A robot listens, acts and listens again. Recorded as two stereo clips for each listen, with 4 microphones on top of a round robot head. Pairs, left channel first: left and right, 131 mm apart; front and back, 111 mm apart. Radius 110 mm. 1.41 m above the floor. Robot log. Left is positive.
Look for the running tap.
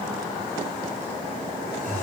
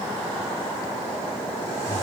cmd idle
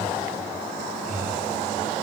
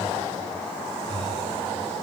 cmd idle
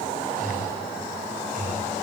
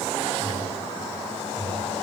end: I can't make out a running tap to turn to.